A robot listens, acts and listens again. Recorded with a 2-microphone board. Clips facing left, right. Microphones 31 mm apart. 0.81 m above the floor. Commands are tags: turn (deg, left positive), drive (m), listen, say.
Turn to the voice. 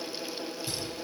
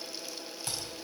<listen/>
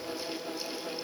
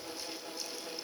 <listen/>
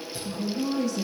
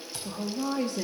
<turn deg="-40"/>
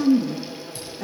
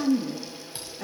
<say>Found it: a woman speaking, straight ahead.</say>